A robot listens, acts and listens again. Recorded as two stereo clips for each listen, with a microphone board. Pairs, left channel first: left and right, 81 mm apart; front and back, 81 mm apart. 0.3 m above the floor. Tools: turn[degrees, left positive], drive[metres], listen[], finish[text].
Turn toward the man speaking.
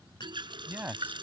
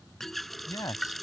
Thought: The man speaking: 25° right.
Action: turn[-25]
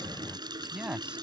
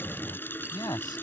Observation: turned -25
Thought: The man speaking is now 15° right.
Action: turn[-15]
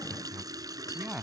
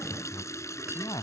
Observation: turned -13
Thought: The man speaking is now 10° right.
Action: turn[-10]
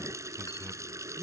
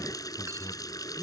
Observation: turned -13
Action: listen[]
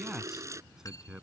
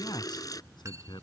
Thought: The man speaking is now 10° right.
Action: turn[-10]
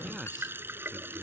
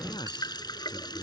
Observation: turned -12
Action: finish[Found it: a man speaking, straight ahead.]